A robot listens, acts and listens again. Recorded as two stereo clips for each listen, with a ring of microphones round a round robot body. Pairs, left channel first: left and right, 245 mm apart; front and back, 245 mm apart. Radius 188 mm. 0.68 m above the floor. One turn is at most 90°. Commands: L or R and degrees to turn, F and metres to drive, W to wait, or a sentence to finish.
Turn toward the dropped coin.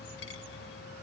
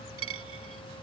L90
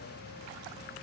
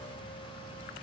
L55
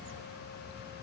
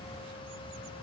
Facing where the dropped coin came from. I can't hear it now.